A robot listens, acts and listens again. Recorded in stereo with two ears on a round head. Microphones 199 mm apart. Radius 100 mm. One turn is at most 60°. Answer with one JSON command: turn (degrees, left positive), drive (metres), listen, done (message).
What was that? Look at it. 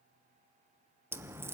{"turn": -30}
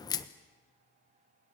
{"turn": 15}
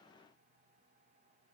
{"done": "Facing where the crack came from. I can't hear it now."}